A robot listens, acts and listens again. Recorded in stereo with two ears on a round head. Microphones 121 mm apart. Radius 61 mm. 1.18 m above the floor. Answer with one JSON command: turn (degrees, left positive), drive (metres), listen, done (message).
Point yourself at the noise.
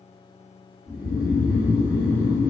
{"turn": -20}
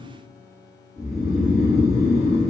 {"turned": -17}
{"done": "Found it: snoring, straight ahead."}